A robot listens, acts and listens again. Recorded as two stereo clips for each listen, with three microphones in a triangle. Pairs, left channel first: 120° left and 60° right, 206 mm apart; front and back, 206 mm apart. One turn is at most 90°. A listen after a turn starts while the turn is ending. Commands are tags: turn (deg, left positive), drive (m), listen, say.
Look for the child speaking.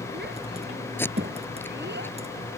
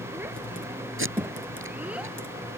<turn deg="-90"/>
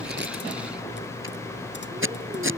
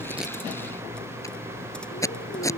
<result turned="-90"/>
<listen/>
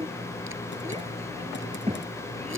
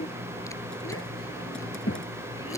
<say>Facing the child speaking.</say>